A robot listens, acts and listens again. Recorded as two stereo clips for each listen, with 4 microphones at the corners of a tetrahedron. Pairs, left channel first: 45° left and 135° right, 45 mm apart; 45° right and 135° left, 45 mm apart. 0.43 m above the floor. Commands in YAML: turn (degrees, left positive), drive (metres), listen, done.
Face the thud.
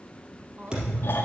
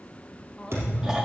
turn: 155
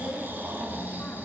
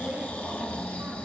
done: "I heard a thud from this way, but can't make it out now."